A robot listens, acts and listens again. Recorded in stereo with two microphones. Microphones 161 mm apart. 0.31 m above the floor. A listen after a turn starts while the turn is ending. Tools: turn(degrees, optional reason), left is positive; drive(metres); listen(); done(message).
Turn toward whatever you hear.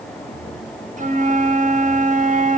turn(degrees=-50, reason="The flute: about 50° right or 130° right.")
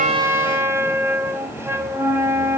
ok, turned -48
turn(degrees=-20, reason="So it is at 20° right.")
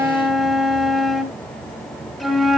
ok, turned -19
done("Facing the flute.")